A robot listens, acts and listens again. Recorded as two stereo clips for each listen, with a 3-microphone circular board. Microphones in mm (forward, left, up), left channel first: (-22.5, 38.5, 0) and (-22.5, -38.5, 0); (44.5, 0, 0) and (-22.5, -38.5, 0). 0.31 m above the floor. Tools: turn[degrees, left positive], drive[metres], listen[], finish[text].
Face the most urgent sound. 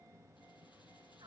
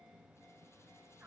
Action: listen[]
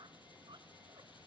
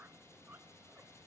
Action: listen[]
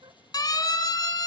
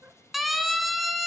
Thought: The siren: 120° left.
Action: turn[120]
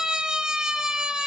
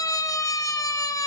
Thought: The siren is now 10° right.
Action: turn[-10]
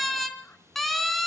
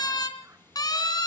Action: finish[Found it: a siren, straight ahead, 2 to 4 m away.]